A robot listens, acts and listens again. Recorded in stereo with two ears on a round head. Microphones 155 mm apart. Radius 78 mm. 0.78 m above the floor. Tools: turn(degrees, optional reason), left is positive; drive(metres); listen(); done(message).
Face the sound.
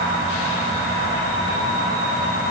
listen()
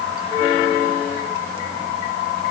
listen()
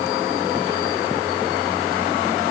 done("I can't make out anything.")